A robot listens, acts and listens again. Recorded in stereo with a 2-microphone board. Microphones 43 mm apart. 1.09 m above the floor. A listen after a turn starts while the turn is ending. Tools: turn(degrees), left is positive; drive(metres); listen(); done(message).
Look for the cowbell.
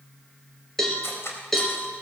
turn(degrees=30)
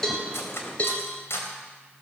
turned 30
turn(degrees=145)
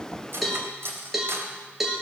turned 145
done("Facing the cowbell, 2 to 4 m away.")